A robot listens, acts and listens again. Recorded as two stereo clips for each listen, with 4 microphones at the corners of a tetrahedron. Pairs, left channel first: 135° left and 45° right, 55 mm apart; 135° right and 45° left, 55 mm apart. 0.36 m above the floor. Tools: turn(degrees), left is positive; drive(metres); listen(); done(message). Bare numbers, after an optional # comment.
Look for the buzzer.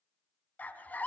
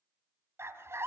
listen()
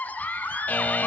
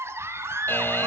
# The buzzer: 175° right.
turn(-175)
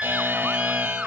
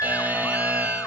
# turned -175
# The buzzer is now 10° right.
turn(-10)
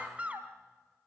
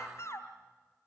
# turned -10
listen()
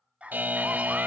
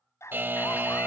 done("Found it: a buzzer, straight ahead, 1 to 2 m away.")